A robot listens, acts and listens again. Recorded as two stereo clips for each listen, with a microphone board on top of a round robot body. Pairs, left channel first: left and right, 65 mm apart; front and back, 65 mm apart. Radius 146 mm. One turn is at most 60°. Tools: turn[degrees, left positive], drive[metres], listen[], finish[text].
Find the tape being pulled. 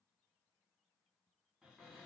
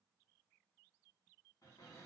Action: listen[]
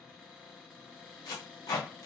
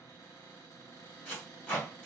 Thought: The tape being pulled: 70° left.
Action: turn[60]
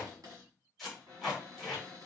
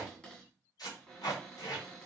Action: finish[Found it: tape being pulled, straight ahead, 1 to 2 m away.]